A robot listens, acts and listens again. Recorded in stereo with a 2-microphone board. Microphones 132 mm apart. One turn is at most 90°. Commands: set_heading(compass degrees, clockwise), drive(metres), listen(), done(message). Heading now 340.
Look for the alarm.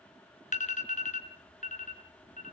set_heading(270)
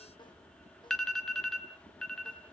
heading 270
done("Found it: an alarm, straight ahead.")